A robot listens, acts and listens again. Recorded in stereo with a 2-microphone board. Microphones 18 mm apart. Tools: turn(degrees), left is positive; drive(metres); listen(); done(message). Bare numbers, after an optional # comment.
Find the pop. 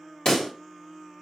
# The pop: about 50° left or 130° left.
turn(50)
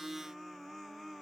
listen()
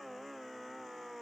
done("I heard a pop, but can't make it out now. It was about straight ahead or 80° left.")